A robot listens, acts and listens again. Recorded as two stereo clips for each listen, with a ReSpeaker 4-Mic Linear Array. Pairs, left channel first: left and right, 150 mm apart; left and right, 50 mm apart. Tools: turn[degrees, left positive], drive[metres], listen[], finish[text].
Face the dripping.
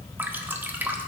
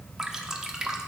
Action: turn[-30]
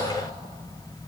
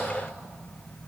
Action: listen[]
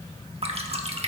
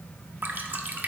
Thought: So it is at 140° right.
Action: turn[-140]
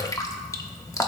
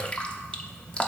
Thought: The dripping is now 20° left.
Action: turn[20]
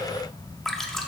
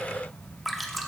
Action: finish[Facing the dripping, 1 to 2 m away.]